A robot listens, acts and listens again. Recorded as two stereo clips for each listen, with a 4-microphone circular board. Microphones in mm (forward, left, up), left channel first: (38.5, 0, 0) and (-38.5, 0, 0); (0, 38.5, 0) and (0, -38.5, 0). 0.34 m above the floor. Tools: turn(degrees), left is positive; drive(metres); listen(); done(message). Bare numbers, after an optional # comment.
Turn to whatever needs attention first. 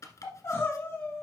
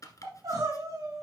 # The crying: 55° right.
turn(-55)
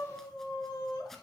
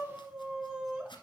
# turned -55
# The crying is now 15° right.
turn(-15)
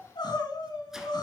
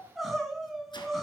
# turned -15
done("Facing the crying.")